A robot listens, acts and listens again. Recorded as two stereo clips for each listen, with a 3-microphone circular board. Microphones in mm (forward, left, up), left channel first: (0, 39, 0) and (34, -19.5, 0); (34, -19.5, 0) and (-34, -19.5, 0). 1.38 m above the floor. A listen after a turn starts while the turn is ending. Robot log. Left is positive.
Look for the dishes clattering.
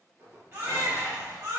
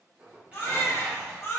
note: The dishes clattering: 115° right.
cmd yaw -115
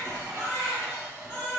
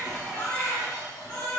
note: The dishes clattering is now 15° right.
cmd yaw -15
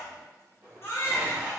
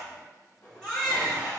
end: Found it: dishes clattering, straight ahead, 1 to 2 m away.